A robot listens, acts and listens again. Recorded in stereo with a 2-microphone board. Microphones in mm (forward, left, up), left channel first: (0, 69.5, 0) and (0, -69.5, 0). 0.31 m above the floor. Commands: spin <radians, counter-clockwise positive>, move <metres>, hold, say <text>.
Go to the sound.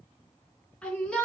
spin 0.52
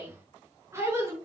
spin -0.35
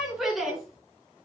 move 1.0
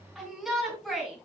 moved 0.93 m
move 1.0
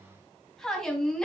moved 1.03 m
move 1.0
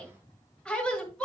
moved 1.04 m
spin 0.17
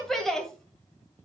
move 1.0
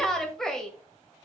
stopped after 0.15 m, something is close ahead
say I am next to the shout.